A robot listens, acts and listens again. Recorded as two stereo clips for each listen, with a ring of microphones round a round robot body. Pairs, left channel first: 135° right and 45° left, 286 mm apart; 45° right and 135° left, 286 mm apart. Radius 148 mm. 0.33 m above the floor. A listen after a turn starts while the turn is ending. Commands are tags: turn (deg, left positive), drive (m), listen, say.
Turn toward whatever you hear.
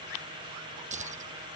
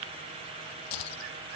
<turn deg="-25"/>
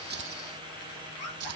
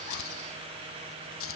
<say>Facing the keys jangling.</say>